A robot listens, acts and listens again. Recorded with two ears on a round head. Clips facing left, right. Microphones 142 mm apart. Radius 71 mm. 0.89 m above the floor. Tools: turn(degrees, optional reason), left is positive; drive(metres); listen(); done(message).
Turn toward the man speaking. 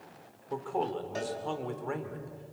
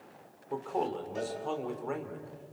turn(degrees=-30)
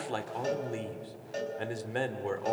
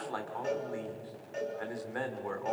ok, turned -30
turn(degrees=30, reason="So it is at 30° left.")
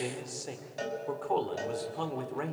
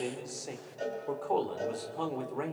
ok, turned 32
done("Facing the man speaking.")